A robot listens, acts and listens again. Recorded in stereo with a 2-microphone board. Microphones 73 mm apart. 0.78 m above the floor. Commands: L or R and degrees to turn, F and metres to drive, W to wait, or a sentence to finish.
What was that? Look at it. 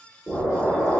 R30
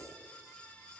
W
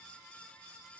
I heard an explosion, but can't make it out now. It was about 25° left or 145° right.